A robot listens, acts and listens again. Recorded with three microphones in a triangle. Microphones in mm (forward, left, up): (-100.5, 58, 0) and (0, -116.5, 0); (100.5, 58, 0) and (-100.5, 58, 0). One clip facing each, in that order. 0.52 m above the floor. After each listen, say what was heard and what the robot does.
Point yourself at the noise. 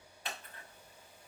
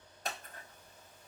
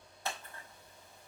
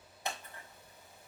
The scissors: 110° right. Turn 110° right.
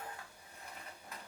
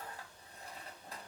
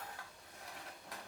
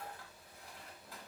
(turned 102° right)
Facing the scissors, 1 to 2 m away.